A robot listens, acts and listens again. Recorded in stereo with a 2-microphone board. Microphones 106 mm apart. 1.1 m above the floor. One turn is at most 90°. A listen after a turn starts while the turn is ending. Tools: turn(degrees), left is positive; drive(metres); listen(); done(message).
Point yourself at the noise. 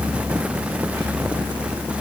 listen()
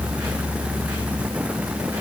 listen()
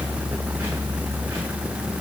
done("I can't make out anything to turn to.")